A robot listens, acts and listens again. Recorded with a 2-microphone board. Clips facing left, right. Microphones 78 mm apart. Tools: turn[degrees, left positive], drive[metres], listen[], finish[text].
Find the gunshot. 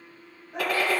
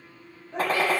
Thought: The gunshot: about 35° right or 145° right.
Action: turn[-35]
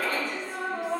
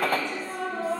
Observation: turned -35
Thought: So it is at 110° right.
Action: turn[-110]
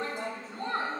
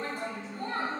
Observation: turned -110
Action: finish[Facing where the gunshot came from. I can't hear it now.]